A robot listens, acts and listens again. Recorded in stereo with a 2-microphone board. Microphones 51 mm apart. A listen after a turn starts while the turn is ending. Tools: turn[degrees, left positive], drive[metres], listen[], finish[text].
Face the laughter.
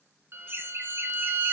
Thought: The laughter: about 40° right or 140° right.
Action: turn[-40]
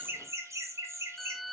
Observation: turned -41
Thought: So it is at 120° right.
Action: turn[-120]
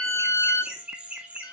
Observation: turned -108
Thought: The laughter is now 25° right.
Action: turn[-25]
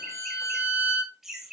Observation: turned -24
Thought: The laughter is now 10° right.
Action: turn[-10]
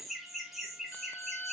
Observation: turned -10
Action: finish[Found it: laughter, straight ahead.]